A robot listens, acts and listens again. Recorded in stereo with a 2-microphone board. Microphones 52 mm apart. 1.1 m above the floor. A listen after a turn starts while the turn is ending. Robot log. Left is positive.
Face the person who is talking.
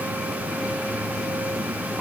cmd idle
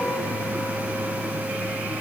cmd idle
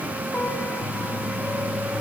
end: I can't make out anyone speaking to turn to.